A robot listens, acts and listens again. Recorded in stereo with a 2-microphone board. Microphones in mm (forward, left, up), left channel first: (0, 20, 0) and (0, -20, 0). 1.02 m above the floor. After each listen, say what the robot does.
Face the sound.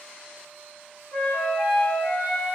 Turn 55° left.
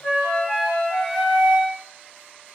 Found it: a flute, straight ahead, 1 to 2 m away.